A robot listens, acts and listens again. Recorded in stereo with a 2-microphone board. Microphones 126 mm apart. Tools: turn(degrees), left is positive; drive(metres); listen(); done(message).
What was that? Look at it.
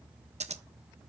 turn(degrees=-65)
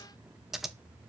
done("Found it: scissors, straight ahead.")